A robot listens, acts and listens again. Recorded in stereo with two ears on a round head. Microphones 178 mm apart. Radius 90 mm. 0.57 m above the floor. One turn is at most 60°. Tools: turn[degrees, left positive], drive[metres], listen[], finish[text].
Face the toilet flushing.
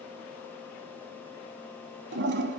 Thought: The toilet flushing: about 60° right or 120° right.
Action: turn[-60]
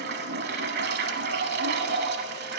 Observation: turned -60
Thought: So it is at 55° right.
Action: turn[-55]
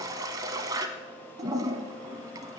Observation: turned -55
Thought: The toilet flushing is now 20° right.
Action: turn[-20]
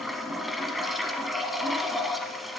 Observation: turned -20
Action: finish[Found it: a toilet flushing, straight ahead, under 1 m away.]